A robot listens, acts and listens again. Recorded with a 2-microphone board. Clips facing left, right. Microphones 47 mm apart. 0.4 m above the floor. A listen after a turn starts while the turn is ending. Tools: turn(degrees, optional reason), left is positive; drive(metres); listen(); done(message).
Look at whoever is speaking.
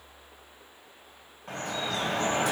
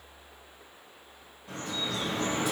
listen()
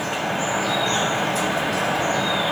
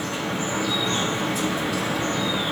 listen()
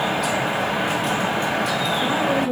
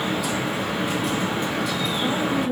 turn(degrees=50, reason="The woman speaking: about 50° left or 130° left.")
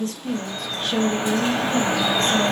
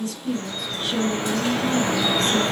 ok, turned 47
turn(degrees=70, reason="So it is at 70° left.")
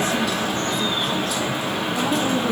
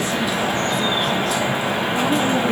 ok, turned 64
listen()
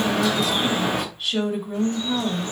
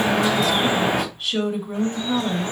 done("Facing the woman speaking.")